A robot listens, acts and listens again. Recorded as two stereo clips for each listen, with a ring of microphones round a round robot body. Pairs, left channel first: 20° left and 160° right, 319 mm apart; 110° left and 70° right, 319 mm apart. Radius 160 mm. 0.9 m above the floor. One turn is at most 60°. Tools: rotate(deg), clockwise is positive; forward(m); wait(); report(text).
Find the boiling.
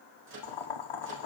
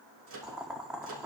rotate(-20)
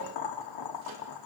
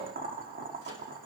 report("Facing the boiling.")